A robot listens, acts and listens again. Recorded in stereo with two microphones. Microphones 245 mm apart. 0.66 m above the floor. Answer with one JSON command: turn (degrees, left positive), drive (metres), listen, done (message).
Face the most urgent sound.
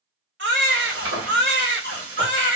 {"turn": -50}
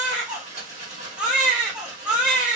{"done": "Found it: a baby crying, straight ahead, 1 to 2 m away."}